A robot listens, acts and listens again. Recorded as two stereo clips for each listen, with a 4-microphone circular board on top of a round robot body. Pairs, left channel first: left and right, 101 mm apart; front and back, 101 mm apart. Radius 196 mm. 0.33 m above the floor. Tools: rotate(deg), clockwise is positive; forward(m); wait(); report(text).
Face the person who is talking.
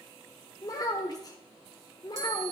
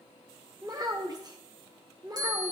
rotate(-135)
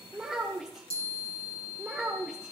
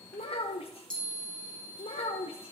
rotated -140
report("Facing the child speaking.")